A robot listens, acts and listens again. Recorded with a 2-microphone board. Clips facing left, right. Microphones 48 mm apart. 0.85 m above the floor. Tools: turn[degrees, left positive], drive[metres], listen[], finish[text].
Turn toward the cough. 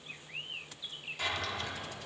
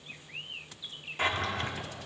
Action: listen[]
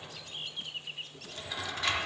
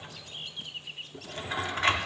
Action: listen[]
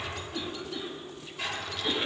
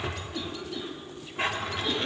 Action: turn[30]
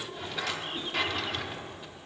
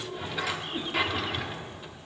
Thought: So it is at 20° right.
Action: turn[-20]
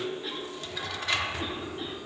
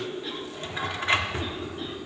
Action: finish[Found it: a cough, straight ahead.]